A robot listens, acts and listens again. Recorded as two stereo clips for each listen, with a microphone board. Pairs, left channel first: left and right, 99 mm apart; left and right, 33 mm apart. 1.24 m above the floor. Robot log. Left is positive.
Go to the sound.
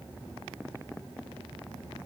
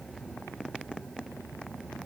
cmd idle
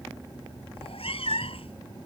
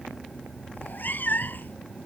note: The cat meowing: about 65° left or 115° left.
cmd yaw +65
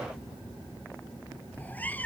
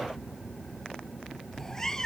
note: So it is at 15° left.
cmd yaw +15
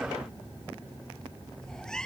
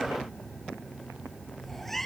cmd fwd 1.0
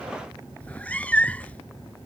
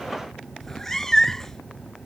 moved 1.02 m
note: The cat meowing is now 15° left.
cmd yaw +15
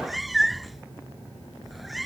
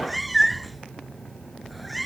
cmd fwd 1.0
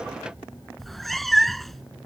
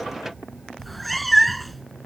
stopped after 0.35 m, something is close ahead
end: Arrived at the cat meowing, straight ahead.